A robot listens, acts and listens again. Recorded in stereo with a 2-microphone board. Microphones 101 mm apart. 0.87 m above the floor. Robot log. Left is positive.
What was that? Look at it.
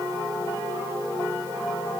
cmd idle
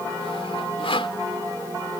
note: The sawing: about 65° left or 115° left.
cmd yaw +65
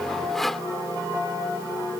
end: Found it: sawing, straight ahead.